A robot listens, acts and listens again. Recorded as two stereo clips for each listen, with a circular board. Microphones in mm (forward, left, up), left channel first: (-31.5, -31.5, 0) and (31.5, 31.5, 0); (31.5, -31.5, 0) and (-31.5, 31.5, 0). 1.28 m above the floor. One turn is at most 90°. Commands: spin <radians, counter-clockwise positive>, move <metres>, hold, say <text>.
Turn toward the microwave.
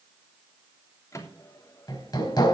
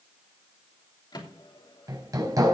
spin -1.40
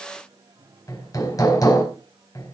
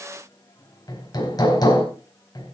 hold
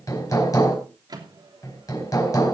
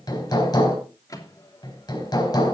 say Found it: a microwave, straight ahead.